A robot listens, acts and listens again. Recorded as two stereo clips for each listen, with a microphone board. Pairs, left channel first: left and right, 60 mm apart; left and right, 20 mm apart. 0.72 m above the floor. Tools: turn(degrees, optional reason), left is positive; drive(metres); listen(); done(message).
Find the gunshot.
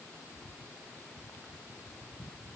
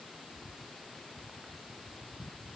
listen()
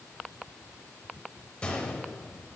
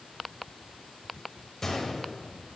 turn(degrees=20, reason="The gunshot: about 20° left or 160° left.")
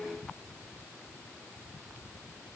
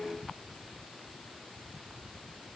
listen()
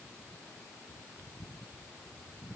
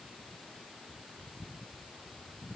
done("I heard a gunshot, but can't make it out now. It was about straight ahead or 140° left.")